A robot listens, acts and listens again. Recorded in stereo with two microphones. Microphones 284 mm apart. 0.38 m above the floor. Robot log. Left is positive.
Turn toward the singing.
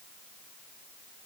cmd idle
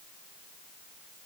cmd idle
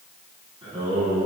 note: The singing: about 20° right or 160° right.
cmd yaw -20
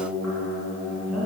end: Facing the singing.